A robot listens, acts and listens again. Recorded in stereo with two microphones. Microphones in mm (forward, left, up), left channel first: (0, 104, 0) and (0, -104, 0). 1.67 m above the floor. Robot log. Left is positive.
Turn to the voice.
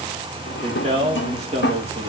note: The man speaking: about 30° right or 150° right.
cmd yaw -30
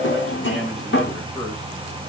end: Facing the man speaking, 2 to 4 m away.